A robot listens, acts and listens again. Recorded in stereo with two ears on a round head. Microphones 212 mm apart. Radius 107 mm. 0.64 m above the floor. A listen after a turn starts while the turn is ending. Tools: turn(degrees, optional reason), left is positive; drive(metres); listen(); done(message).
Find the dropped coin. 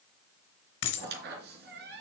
turn(degrees=75, reason="The dropped coin: about 75° left or 105° left.")
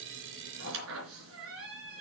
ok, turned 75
listen()
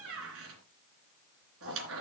done("I heard a dropped coin, but can't make it out now. It was about straight ahead or 30° left.")